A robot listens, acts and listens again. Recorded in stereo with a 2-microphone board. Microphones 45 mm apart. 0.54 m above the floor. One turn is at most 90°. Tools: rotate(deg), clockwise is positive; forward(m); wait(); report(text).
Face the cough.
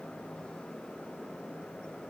wait()
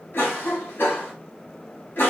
rotate(-50)
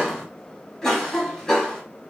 rotate(-15)
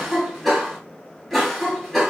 report("Found it: a cough, straight ahead.")